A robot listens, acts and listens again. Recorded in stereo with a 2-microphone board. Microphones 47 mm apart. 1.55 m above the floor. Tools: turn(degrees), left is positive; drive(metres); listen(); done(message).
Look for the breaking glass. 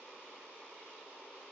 listen()
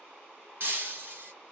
turn(degrees=-45)
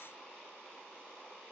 listen()
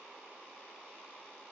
done("I heard breaking glass, but can't make it out now. It was about straight ahead or 90° right.")